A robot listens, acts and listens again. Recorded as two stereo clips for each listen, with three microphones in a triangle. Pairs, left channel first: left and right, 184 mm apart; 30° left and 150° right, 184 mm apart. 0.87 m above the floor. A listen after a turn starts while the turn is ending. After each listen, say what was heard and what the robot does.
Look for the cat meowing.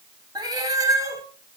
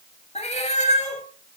The cat meowing: 20° right. Turn 20° right.
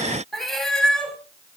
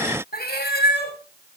Facing the cat meowing, 2 to 4 m away.